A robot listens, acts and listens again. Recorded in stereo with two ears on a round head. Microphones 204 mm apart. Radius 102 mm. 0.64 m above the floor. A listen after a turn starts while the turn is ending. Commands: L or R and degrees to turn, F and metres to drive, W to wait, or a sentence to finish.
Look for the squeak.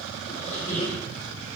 L30
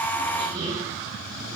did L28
W
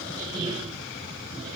R15
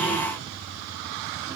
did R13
W
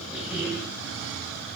Found it: a squeak, straight ahead, over 4 m away.